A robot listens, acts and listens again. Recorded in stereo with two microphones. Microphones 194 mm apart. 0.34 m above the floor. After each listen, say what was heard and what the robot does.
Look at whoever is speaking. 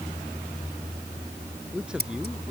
Turn 30° right.
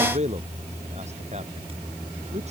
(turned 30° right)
So it is at 145° right. Turn 145° right.
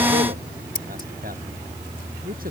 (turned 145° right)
The man speaking is now 50° right. Turn 50° right.
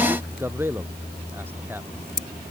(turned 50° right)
The man speaking is now 10° right. Turn 10° right.
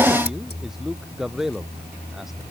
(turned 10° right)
Found it: a man speaking, straight ahead.